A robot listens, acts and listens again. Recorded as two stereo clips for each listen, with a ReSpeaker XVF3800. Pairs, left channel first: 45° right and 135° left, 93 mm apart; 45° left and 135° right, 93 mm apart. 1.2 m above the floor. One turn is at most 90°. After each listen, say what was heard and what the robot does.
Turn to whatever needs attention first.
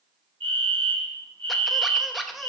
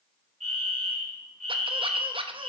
The fire alarm: 140° left. Turn 90° left.
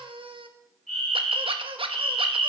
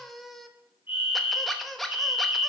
The fire alarm is now 50° left. Turn 50° left.
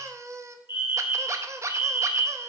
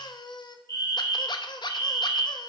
The fire alarm is now 10° right. Turn 10° right.
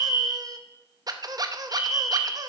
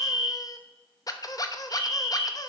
Facing the fire alarm.